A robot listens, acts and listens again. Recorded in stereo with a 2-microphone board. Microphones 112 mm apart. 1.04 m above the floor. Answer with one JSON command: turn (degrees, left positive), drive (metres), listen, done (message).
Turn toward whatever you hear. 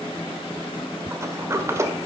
{"turn": -25}
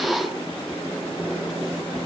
{"done": "Facing the sliding door."}